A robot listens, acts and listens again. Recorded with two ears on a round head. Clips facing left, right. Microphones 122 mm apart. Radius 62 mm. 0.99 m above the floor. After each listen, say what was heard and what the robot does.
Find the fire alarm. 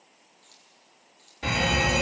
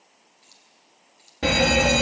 The fire alarm: about 60° right or 120° right. Turn 60° right.
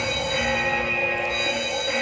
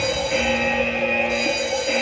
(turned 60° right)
So it is at 35° right. Turn 35° right.
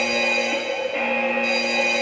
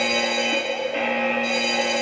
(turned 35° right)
The fire alarm is now 10° left. Turn 10° left.
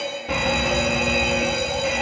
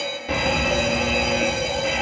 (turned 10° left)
Facing the fire alarm.